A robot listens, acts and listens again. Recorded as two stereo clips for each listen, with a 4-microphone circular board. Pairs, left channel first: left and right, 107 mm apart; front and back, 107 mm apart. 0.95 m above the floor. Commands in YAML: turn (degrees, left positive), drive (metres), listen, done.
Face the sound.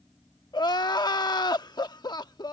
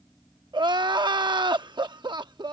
turn: 135
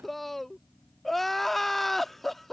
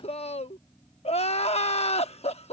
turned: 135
done: "Found it: crying, straight ahead."